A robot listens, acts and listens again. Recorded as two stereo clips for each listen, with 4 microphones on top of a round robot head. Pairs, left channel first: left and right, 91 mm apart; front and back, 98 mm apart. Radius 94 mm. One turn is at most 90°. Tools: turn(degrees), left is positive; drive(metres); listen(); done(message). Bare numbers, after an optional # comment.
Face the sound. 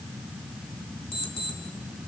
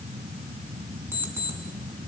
# The alarm clock: 110° left.
turn(90)
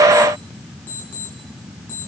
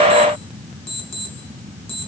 # The alarm clock is now 15° left.
turn(15)
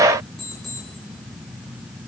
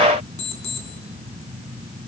done("Found it: an alarm clock, straight ahead.")